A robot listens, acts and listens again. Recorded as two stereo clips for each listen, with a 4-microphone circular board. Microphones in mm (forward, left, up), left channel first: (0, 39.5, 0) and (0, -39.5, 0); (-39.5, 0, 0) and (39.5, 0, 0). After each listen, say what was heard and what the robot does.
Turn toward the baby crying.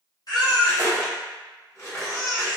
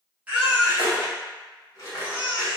The baby crying: 70° left. Turn 70° left.
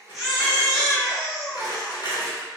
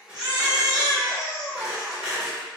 Found it: a baby crying, straight ahead, under 1 m away.